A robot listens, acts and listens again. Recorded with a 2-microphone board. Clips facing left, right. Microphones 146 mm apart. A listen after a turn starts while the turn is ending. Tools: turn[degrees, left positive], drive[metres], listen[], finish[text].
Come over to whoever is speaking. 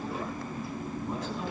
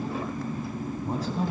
Thought: The man speaking: about 35° right or 145° right.
Action: turn[-35]
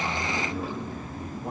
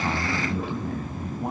Thought: So it is at 105° right.
Action: turn[-105]
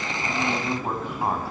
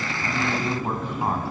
Action: drive[1.0]
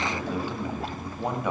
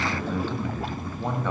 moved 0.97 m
Thought: The man speaking is now 15° left.
Action: turn[15]
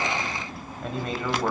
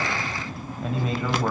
Action: drive[1.0]
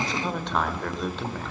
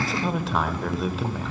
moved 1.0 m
Action: drive[1.0]
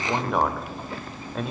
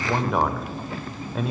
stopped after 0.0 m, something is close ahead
Action: finish[I am next to the man speaking.]